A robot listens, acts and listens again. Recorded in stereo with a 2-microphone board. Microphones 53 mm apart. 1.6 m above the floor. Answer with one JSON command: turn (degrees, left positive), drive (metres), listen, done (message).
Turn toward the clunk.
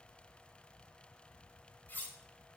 {"listen": true}
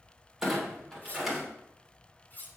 {"turn": 30}
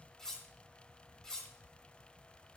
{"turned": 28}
{"listen": true}
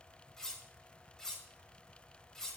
{"done": "I heard a clunk, but can't make it out now. It was about 30° right or 155° left."}